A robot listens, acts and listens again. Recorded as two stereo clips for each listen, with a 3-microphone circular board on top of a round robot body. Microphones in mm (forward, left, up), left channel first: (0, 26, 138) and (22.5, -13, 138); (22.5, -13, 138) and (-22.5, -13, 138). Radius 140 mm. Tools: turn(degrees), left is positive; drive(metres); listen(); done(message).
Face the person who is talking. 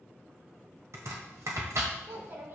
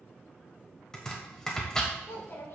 turn(degrees=-30)
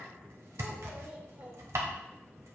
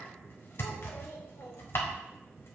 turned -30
turn(degrees=-10)
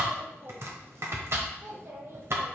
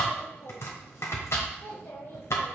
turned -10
turn(degrees=-35)
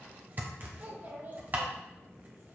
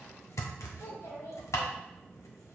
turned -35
turn(degrees=-15)
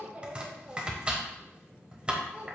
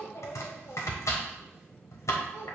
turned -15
done("Facing the child speaking.")